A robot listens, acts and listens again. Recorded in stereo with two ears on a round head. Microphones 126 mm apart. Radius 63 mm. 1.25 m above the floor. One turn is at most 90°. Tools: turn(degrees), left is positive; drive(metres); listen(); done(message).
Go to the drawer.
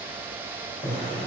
turn(degrees=50)
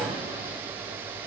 drive(metres=1.0)
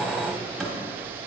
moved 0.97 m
drive(metres=1.0)
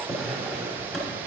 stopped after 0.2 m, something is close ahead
done("I am next to the drawer.")